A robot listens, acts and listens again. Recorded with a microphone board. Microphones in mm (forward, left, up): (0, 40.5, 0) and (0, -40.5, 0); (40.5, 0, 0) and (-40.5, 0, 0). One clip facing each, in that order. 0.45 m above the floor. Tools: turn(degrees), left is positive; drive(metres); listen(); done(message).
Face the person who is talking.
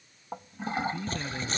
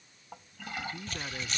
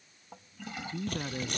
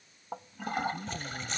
turn(degrees=-10)
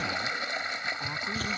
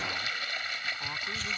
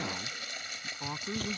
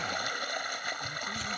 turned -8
listen()
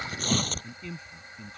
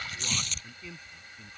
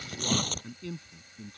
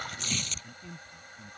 done("Found it: a man speaking, straight ahead.")